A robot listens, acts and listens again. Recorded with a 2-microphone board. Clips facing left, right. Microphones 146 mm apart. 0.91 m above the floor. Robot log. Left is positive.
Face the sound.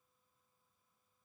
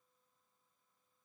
cmd idle
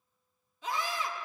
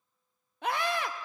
note: The scream: about 70° right or 110° right.
cmd yaw -70
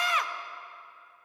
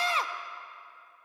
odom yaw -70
note: So it is at 35° right.
cmd yaw -35
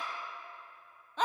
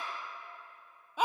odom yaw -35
note: The scream is now 10° right.
cmd yaw -10
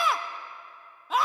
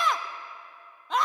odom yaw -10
end: Facing the scream.